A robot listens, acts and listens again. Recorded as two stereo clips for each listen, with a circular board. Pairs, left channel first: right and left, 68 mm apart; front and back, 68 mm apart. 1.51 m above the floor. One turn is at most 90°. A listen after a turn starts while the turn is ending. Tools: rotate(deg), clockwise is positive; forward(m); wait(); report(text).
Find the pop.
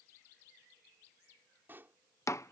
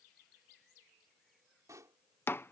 rotate(-90)
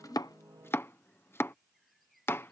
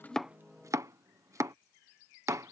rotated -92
rotate(-55)
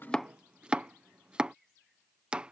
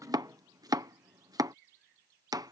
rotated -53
report("I heard a pop from this way, but can't make it out now.")